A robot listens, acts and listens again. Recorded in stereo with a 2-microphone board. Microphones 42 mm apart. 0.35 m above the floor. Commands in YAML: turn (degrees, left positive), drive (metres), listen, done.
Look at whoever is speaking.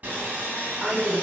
turn: 15
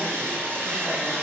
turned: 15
listen: true
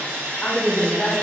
turn: 150
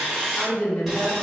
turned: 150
turn: 30
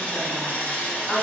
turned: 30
done: "Facing the woman speaking."